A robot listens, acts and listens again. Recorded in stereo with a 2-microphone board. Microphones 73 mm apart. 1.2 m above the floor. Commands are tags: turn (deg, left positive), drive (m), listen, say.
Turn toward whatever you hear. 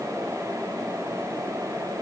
<listen/>
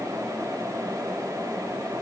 <listen/>
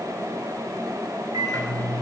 <turn deg="-90"/>
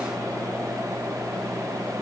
<listen/>
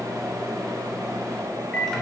<say>Found it: a microwave, straight ahead.</say>